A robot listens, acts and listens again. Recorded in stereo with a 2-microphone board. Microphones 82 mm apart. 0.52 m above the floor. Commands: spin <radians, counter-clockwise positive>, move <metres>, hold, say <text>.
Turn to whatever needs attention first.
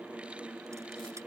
hold
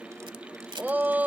spin -0.35
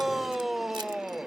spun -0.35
say Facing the shout.